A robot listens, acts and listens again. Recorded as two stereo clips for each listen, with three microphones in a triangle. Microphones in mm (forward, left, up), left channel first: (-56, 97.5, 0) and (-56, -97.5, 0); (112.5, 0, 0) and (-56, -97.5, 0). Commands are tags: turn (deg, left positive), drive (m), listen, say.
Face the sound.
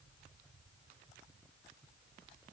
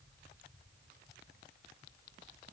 <listen/>
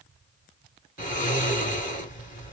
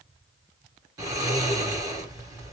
<turn deg="140"/>
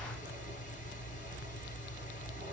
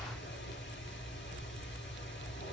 <turn deg="45"/>
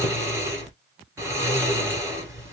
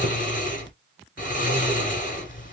<turn deg="-15"/>
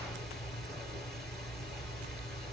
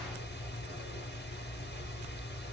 <say>Found it: snoring, straight ahead.</say>